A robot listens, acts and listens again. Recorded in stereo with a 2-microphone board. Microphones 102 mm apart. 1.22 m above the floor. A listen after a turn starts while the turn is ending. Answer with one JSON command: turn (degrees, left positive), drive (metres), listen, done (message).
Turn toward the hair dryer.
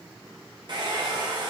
{"turn": -45}
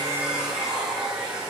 {"done": "Facing the hair dryer, 1 to 2 m away."}